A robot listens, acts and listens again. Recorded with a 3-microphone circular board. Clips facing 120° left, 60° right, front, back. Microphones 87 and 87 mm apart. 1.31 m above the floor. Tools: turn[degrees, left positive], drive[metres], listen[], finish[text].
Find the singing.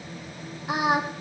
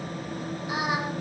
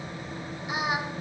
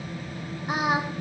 Thought: The singing: 140° left.
Action: turn[140]
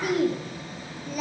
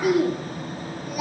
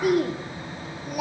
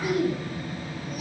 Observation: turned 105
Thought: The singing is now 20° left.
Action: turn[20]
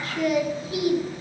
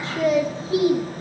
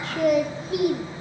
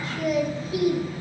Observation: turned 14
Action: finish[Facing the singing, 2 to 4 m away.]